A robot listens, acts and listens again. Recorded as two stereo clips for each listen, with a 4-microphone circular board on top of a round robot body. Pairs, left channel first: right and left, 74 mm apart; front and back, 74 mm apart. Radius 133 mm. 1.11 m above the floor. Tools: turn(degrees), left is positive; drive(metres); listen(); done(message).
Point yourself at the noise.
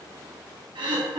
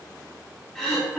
turn(degrees=80)
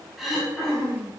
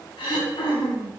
done("Found it: throat clearing, straight ahead, 2 to 4 m away.")